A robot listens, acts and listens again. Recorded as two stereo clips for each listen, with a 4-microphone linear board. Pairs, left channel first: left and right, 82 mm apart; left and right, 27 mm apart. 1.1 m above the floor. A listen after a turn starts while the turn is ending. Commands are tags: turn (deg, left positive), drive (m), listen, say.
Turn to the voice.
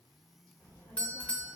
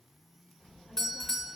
<turn deg="15"/>
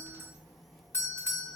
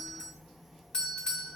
<say>Found it: a child speaking, straight ahead.</say>